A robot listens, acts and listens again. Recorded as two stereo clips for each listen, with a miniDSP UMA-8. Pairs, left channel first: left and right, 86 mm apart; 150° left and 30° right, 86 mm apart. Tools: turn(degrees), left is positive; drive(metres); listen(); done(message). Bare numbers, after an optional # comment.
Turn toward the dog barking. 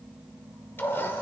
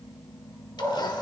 # The dog barking: 15° left.
turn(15)
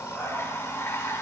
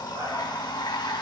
listen()
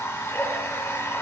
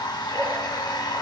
listen()
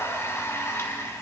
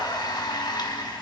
done("I heard a dog barking from this way, but can't make it out now.")